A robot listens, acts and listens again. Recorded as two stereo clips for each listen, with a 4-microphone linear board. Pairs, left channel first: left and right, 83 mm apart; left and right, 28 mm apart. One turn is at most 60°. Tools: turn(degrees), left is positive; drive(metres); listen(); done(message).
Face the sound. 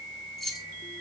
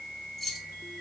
turn(degrees=30)
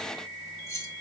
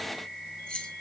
turn(degrees=60)
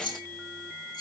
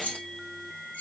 turn(degrees=60)
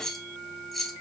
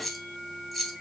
done("Found it: keys jangling, straight ahead.")